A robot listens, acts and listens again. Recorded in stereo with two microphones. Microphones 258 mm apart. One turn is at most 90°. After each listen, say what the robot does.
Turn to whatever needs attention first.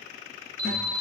Turn 60° left.
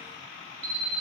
Turn 50° left.
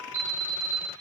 Facing the alarm, 2 to 4 m away.